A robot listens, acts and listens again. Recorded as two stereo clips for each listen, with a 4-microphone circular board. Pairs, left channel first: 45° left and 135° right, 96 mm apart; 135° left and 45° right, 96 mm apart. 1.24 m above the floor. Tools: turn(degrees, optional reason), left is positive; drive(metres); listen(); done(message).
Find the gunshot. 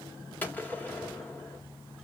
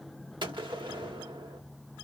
turn(degrees=-25, reason="The gunshot: 25° right.")
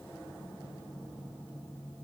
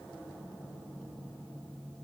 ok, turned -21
done("I heard a gunshot from this way, but can't make it out now.")